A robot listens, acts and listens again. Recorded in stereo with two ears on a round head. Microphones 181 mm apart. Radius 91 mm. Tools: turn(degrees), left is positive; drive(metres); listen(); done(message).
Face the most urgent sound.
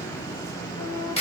listen()
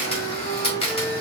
listen()
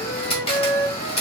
done("I can't make out anything urgent to turn to.")